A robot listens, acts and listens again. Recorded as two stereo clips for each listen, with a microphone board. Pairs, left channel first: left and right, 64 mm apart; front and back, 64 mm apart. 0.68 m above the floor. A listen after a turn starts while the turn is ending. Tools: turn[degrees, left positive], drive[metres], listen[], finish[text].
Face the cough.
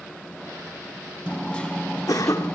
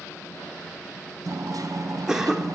Thought: The cough: 100° left.
Action: turn[100]
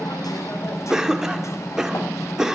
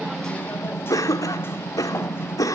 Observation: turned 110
Thought: The cough is now 10° right.
Action: turn[-10]
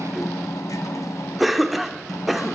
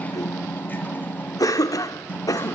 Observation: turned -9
Action: finish[Facing the cough, 1 to 2 m away.]